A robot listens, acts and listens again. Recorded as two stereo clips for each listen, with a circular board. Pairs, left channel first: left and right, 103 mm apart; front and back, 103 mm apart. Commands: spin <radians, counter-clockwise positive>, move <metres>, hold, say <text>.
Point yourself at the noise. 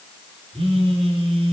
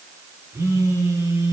spin -2.09
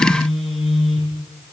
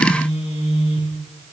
say Found it: a phone buzzing, straight ahead, 2 to 4 m away.